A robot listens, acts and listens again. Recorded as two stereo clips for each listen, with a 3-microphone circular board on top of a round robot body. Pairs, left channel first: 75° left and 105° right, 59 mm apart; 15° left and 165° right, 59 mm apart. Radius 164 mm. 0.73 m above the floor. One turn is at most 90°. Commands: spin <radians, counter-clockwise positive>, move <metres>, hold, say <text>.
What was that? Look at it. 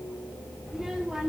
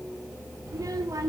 spin 1.57
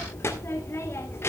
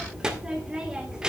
spin 1.57
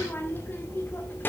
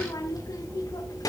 spin 0.35
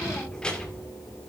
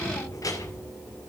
say Facing the child speaking.